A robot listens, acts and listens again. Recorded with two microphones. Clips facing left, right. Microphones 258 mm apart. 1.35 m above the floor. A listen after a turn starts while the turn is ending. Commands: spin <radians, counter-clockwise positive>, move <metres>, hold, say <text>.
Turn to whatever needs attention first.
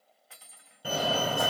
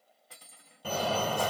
spin 0.52
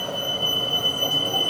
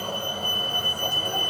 spin 2.44
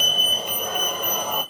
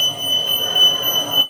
spin -0.17
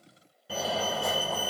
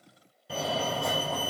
say Facing the fire alarm.